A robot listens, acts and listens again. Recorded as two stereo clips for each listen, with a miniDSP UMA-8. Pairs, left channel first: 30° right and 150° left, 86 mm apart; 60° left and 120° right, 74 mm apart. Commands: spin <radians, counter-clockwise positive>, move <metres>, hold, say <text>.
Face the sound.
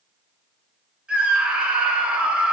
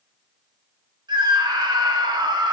spin -2.27
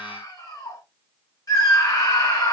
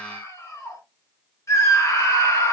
spin 0.26
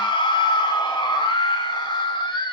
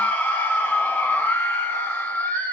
say Facing the scream.